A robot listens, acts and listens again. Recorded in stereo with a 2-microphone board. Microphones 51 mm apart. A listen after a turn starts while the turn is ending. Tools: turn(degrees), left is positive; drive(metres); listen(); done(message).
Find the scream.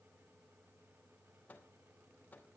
listen()
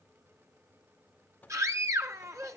turn(degrees=-70)
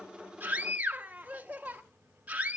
turn(degrees=-30)
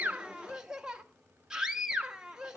turn(degrees=-15)
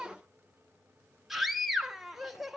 done("Found it: a scream, straight ahead, 1 to 2 m away.")